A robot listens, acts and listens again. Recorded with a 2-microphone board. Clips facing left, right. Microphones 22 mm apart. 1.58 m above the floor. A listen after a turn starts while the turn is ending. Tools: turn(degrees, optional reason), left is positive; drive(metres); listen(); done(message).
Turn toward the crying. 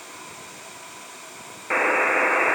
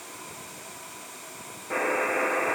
listen()
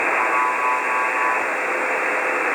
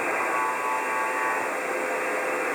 listen()
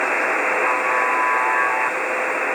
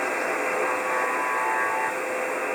done("I can't make out crying, only a buzzer.")